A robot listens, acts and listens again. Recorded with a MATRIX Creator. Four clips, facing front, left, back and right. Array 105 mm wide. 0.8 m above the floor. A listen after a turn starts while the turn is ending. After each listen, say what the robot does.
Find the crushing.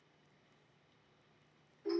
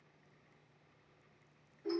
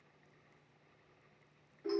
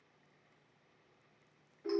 Keep listening.
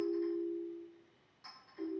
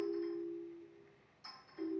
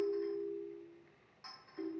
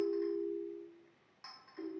Keep listening.
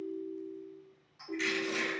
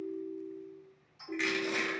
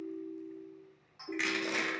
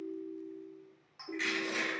Turn 160° left.
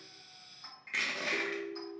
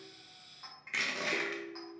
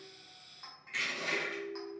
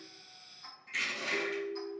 Turn 55° left.
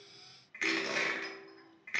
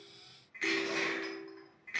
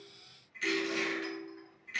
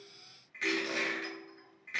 Found it: crushing, straight ahead, under 1 m away.